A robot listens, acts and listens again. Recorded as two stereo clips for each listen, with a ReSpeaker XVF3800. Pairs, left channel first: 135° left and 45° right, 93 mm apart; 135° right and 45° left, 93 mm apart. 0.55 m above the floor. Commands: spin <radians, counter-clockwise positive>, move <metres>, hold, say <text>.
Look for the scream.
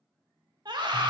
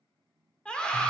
spin -1.05
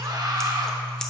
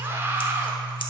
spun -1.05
spin -0.17
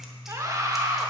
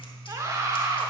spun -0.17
say Found it: a scream, straight ahead.